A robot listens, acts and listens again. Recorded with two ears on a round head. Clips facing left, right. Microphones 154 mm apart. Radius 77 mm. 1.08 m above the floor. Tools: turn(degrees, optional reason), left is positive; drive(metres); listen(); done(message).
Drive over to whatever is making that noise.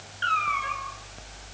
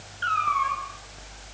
turn(degrees=25, reason="The cat meowing: about 25° left or 155° left.")
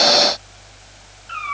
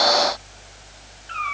drive(metres=1.0)
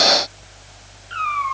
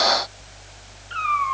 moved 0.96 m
drive(metres=1.0)
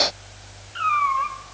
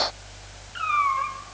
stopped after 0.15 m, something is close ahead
done("Something is in my way. I am facing the cat meowing but have not reached it.")